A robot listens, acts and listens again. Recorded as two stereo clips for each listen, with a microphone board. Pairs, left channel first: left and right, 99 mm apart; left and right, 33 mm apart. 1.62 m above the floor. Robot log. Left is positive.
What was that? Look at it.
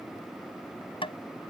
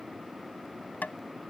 note: The tapping: about 60° left or 120° left.
cmd yaw +60
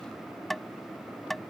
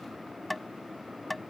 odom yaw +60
end: Found it: tapping, straight ahead.